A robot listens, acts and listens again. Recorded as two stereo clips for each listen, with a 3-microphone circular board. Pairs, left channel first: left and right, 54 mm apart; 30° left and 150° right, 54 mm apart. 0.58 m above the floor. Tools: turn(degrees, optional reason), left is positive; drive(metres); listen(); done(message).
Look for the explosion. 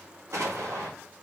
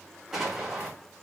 turn(degrees=-65, reason="The explosion: 65° right.")
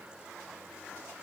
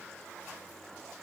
done("I heard an explosion from this way, but can't make it out now.")